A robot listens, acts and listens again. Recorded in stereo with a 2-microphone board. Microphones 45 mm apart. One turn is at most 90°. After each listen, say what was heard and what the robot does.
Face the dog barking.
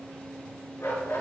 The dog barking: about 75° left or 105° left. Turn 75° left.
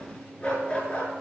So it is at 30° left. Turn 30° left.
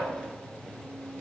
Keep listening.
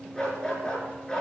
The dog barking is now 20° left. Turn 20° left.
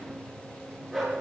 Facing the dog barking.